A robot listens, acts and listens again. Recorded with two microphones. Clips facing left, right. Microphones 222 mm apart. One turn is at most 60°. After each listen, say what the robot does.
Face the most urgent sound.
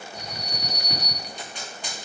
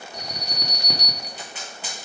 Turn 60° right.
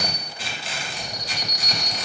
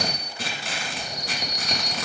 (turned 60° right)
Turn 25° right.
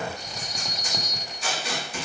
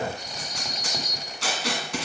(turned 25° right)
Found it: an alarm, straight ahead, 1 to 2 m away.